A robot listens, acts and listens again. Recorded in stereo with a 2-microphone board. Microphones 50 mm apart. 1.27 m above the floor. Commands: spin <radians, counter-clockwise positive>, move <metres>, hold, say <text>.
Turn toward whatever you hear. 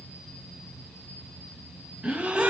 spin -0.44
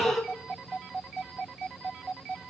say Facing the gasp, under 1 m away.